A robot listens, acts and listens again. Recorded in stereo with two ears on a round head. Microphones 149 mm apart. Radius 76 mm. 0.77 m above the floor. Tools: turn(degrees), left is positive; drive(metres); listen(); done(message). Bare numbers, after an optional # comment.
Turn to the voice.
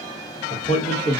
# The man speaking: about 35° left or 145° left.
turn(35)
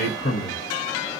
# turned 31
# So it is at 105° left.
turn(105)
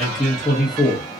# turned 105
done("Found it: a man speaking, straight ahead.")